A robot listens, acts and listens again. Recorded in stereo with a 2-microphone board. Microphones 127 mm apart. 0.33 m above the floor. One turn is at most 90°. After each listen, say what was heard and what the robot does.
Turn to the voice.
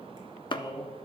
The man speaking: about 35° left or 145° left. Turn 35° left.
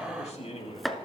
So it is at 125° left. Turn 90° left.
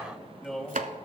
Found it: a man speaking, straight ahead, 2 to 4 m away.